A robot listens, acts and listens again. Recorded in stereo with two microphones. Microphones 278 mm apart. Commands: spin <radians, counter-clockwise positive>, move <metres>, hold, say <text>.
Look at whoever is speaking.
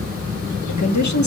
spin 1.57
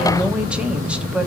say Facing the woman speaking, 1 to 2 m away.